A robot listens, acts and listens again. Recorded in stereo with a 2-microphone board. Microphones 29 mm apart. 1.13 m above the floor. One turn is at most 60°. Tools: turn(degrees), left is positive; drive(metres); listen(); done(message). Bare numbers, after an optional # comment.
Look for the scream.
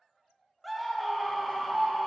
turn(30)
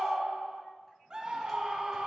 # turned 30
# So it is at 30° right.
turn(-30)
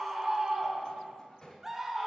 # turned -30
# The scream is now 15° right.
turn(-15)
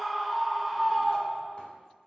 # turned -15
done("Facing the scream, under 1 m away.")